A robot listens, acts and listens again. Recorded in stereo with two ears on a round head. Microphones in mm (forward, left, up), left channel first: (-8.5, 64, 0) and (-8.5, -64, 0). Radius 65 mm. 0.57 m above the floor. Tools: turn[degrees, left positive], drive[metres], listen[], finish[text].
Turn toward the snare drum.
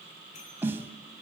Action: turn[-30]
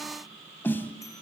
Thought: So it is at 15° left.
Action: turn[15]
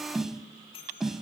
Action: finish[Facing the snare drum, under 1 m away.]